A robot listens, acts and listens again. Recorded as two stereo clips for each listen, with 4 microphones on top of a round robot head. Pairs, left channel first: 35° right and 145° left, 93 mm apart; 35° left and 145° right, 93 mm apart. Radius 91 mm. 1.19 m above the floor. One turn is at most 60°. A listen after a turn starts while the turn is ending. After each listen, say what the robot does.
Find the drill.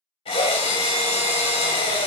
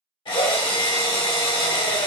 Found it: a drill, straight ahead.